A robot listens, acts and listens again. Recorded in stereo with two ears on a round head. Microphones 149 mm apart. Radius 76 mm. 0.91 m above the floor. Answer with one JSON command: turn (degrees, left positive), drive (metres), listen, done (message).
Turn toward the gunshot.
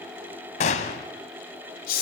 {"turn": 45}
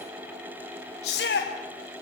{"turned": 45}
{"listen": true}
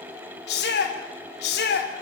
{"done": "I heard a gunshot, but can't make it out now. It was about straight ahead or 90° left."}